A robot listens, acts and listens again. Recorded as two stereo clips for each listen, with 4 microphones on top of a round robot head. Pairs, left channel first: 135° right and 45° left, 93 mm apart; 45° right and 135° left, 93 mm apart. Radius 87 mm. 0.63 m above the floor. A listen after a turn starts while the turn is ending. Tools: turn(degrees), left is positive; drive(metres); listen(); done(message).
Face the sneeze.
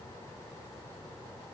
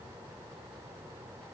listen()
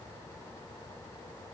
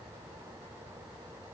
listen()
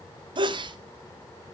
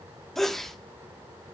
turn(degrees=40)
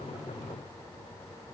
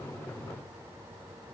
done("I heard a sneeze from this way, but can't make it out now.")